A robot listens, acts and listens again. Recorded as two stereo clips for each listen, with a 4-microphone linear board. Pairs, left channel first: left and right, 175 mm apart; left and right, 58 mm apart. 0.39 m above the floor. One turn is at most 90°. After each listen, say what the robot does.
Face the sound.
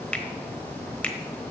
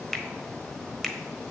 Turn 30° left.
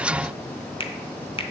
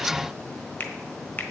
Turn 90° left.
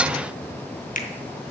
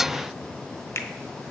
Turn 60° left.
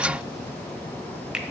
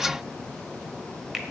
Facing the finger snap, 1 to 2 m away.